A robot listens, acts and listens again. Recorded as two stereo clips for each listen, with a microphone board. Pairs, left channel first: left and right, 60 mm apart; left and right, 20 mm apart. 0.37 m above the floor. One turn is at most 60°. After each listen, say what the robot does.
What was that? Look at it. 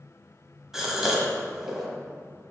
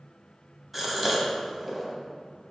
Turn 30° right.
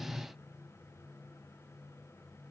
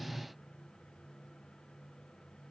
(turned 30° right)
Keep listening.
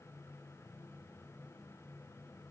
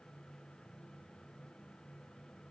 I heard a gasp, but can't make it out now. It was about 20° left or 140° right.